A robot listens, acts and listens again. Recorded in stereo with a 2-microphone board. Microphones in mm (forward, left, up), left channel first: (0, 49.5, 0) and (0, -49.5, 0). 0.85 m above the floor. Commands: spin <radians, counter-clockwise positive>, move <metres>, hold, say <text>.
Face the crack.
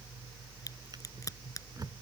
spin 0.61
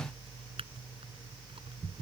hold
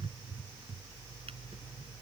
say I heard a crack, but can't make it out now. It was about straight ahead or 110° left.